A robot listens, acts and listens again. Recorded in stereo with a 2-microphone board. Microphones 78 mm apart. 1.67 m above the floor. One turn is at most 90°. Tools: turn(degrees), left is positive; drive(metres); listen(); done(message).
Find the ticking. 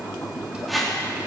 listen()
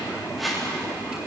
listen()
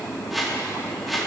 done("I can't make out ticking to turn to.")